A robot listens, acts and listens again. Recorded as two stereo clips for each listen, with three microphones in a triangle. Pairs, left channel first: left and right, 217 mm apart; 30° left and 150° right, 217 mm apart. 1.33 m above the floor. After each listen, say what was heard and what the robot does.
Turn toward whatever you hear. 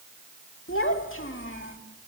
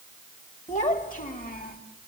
The child speaking: 75° left. Turn 75° left.
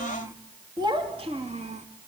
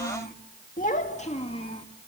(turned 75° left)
The child speaking is now 35° right. Turn 35° right.
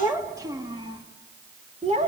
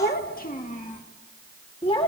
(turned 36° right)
The child speaking is now 35° right. Turn 35° right.
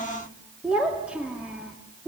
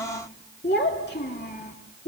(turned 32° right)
Found it: a child speaking, straight ahead, 2 to 4 m away.